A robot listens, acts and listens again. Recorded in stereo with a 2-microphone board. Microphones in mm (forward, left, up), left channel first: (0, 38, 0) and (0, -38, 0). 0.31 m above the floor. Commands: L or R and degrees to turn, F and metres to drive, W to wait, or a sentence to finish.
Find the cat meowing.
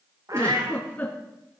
R45
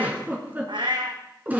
R85
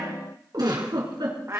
R35
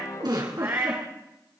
R30
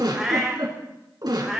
Facing the cat meowing.